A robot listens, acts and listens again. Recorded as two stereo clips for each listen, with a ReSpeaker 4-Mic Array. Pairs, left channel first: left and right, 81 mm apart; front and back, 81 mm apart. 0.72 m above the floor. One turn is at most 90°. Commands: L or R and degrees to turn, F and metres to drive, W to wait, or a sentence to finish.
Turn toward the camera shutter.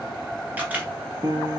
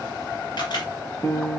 R20
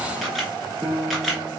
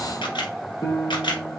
Found it: a camera shutter, straight ahead, 1 to 2 m away.